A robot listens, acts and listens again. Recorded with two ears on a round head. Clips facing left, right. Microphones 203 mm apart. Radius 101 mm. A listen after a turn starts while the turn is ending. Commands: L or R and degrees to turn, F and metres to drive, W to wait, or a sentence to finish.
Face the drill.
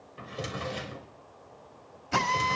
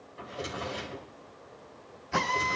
L70
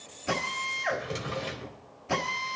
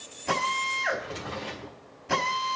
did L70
Facing the drill.